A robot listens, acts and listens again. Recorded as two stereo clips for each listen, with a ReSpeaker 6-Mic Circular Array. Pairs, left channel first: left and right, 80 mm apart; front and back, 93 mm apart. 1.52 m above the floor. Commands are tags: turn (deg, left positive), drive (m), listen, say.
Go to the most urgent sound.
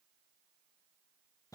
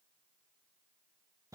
<listen/>
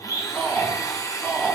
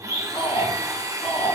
<turn deg="15"/>
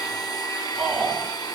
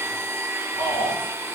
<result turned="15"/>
<drive m="1.0"/>
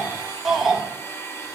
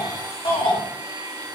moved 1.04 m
<drive m="1.0"/>
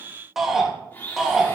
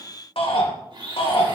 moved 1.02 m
<drive m="1.0"/>
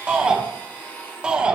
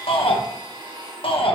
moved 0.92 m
<turn deg="-10"/>
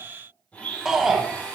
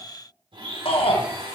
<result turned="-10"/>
<drive m="1.0"/>
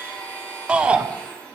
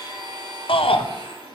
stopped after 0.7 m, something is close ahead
<turn deg="-15"/>
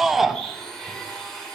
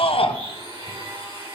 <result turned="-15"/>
<say>I am next to the shout.</say>